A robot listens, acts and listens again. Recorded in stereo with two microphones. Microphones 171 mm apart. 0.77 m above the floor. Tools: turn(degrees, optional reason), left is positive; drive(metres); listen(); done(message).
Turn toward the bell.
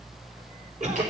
listen()
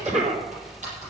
listen()
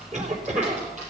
done("I can't make out a bell to turn to.")